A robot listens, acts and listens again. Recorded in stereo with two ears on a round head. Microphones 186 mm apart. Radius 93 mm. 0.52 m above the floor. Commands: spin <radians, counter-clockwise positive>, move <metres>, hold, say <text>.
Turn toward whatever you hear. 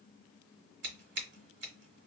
spin -1.05
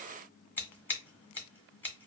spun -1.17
spin 0.17
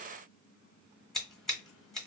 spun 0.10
say Found it: scissors, straight ahead.